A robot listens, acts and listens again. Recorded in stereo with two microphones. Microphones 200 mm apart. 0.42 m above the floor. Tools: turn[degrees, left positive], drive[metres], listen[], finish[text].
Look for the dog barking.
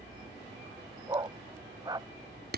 Thought: The dog barking: about 20° right or 160° right.
Action: turn[-20]
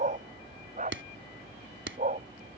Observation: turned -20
Thought: So it is at 140° right.
Action: turn[-140]
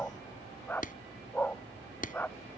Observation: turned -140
Thought: The dog barking is now 10° left.
Action: turn[10]
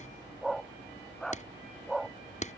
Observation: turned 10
Action: finish[Found it: a dog barking, straight ahead.]